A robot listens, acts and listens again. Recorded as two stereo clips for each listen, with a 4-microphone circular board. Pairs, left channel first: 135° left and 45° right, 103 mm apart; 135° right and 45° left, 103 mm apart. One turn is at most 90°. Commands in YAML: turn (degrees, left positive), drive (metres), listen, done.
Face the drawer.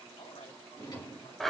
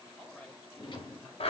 turn: -90
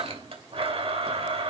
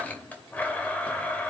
turn: -85
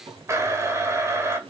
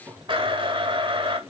turn: -20
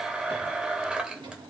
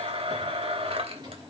done: "Facing the drawer."